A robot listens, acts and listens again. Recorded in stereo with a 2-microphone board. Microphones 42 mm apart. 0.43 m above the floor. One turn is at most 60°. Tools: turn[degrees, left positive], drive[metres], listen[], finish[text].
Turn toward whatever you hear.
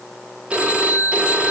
Thought: The phone ringing: about 25° right or 155° right.
Action: turn[-25]
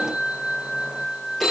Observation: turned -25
Action: finish[Found it: a phone ringing, straight ahead, 1 to 2 m away.]